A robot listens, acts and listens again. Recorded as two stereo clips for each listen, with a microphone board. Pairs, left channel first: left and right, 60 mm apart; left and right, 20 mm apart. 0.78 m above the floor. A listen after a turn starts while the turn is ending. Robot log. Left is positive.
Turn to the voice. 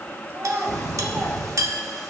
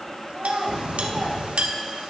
note: The child speaking: about 50° right or 130° right.
cmd yaw -50
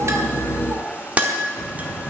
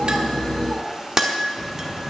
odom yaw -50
cmd idle
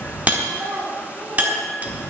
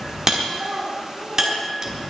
note: So it is at 75° right.
cmd yaw -75
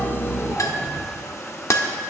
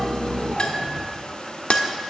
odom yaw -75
cmd idle
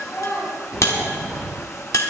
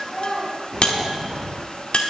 note: The child speaking is now 20° left.
cmd yaw +20
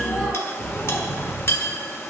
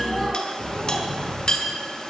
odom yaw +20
cmd idle
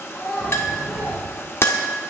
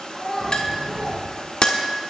end: Found it: a child speaking, straight ahead.